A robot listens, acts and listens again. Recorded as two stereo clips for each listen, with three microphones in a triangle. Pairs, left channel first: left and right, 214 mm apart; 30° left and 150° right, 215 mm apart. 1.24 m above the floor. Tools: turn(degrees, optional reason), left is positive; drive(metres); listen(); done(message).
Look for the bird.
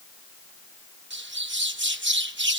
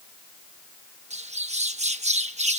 turn(degrees=-95, reason="The bird: 95° right.")
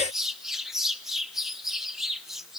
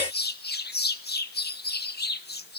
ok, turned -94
done("Facing the bird, 1 to 2 m away.")